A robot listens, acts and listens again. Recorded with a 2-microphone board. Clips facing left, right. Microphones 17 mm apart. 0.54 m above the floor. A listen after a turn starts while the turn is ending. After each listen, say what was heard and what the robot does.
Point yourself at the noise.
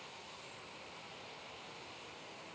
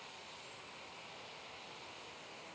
Keep listening.
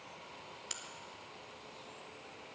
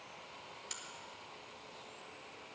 The crack: about 25° left or 155° left. Turn 25° left.
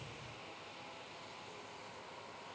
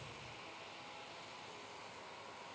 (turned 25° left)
Keep listening.
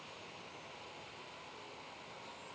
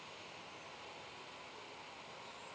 I heard a crack, but can't make it out now. It was about straight ahead or 130° left.